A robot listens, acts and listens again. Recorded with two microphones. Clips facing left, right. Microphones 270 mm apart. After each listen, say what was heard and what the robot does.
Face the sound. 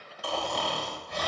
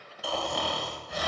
Turn 30° left.
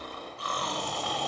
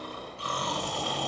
So it is at 30° right. Turn 30° right.
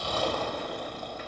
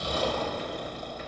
The snoring is now 20° right. Turn 20° right.
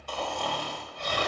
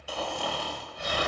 The snoring is now 10° right. Turn 10° right.
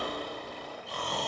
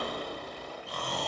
Found it: snoring, straight ahead.